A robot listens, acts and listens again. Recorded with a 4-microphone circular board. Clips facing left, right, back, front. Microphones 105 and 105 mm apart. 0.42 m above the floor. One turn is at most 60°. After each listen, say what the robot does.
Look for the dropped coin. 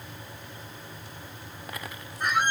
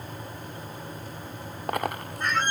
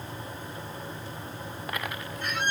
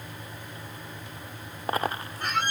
Turn 55° right.
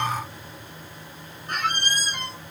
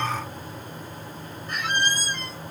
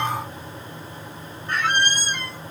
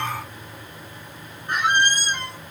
Facing where the dropped coin came from. I can't hear it now.